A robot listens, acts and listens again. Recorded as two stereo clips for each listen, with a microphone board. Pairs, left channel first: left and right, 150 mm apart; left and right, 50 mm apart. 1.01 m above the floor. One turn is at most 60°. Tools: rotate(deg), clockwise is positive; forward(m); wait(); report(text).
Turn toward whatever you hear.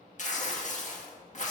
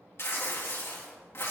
rotate(-55)
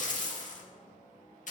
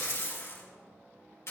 rotate(-60)
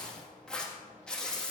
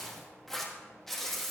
report("Facing the tearing paper, 1 to 2 m away.")